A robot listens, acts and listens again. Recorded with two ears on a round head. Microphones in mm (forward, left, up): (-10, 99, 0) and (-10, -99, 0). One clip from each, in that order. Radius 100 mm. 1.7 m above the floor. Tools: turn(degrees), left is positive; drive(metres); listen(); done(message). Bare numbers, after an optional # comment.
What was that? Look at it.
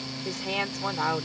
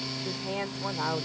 # The woman speaking: about 60° left or 120° left.
turn(60)
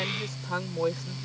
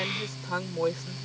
done("Facing the woman speaking.")